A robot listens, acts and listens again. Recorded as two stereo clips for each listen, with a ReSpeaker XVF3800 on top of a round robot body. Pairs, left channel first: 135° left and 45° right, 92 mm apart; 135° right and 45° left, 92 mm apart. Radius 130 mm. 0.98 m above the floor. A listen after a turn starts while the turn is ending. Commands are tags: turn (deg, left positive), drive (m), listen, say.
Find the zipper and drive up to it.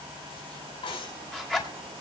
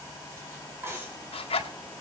<turn deg="-140"/>
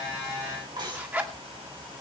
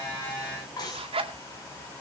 <turn deg="25"/>
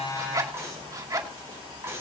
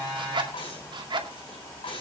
<drive m="1.0"/>
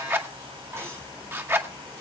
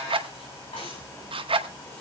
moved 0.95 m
<turn deg="20"/>
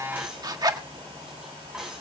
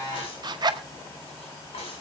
<drive m="1.0"/>
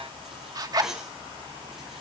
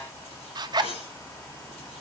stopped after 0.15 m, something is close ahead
<say>I am next to the zipper.</say>